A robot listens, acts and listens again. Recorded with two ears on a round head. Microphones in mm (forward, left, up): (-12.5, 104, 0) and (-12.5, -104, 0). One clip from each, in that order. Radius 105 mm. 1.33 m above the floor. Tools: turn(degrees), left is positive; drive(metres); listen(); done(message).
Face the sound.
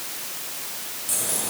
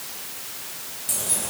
turn(degrees=-30)
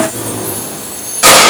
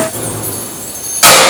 turn(degrees=-135)
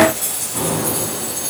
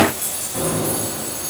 done("Facing the keys jangling.")